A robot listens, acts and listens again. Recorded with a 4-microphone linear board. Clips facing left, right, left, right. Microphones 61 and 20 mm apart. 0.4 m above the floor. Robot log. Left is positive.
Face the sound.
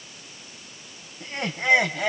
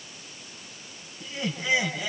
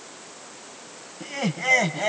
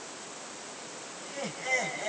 note: The laughter: about 60° left or 120° left.
cmd yaw +60
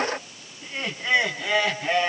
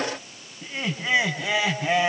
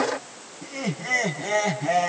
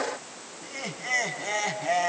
end: Facing the laughter, over 4 m away.